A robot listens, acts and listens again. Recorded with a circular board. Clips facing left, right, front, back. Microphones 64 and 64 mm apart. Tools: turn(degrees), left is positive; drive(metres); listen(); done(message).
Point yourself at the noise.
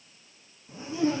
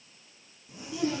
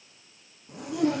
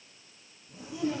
turn(degrees=30)
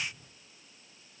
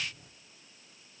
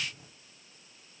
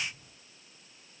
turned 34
done("Found it: a zipper, straight ahead.")